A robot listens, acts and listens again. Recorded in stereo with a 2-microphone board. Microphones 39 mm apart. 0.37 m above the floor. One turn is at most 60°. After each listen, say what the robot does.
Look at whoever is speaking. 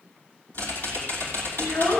Turn 60° left.
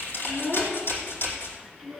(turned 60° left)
Facing the child speaking, 2 to 4 m away.